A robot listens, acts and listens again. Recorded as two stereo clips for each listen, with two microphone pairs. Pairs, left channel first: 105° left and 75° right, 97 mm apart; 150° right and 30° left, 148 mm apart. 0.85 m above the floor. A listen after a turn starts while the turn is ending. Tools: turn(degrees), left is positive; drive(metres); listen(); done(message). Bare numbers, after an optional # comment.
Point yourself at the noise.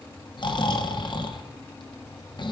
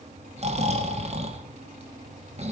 # The snoring: 70° left.
turn(70)
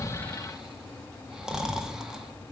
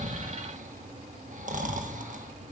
done("Found it: snoring, straight ahead, 1 to 2 m away.")